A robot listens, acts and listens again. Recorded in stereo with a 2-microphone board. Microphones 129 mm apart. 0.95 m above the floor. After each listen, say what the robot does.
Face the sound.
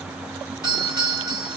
Turn 25° left.
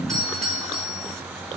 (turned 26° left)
Found it: a doorbell, straight ahead.